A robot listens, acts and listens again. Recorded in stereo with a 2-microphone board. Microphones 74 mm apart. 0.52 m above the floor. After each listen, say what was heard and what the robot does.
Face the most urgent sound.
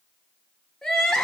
Turn 30° left.
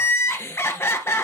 So it is at 145° left. Turn 145° left.
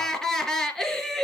Found it: crying, straight ahead, 1 to 2 m away.